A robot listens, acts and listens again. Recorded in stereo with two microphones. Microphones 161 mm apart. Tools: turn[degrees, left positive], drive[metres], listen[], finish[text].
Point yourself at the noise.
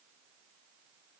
Action: listen[]
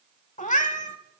Thought: The cat meowing: about 55° left or 125° left.
Action: turn[55]
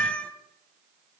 Thought: So it is at 10° left.
Action: turn[10]
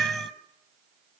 Action: finish[Found it: a cat meowing, straight ahead.]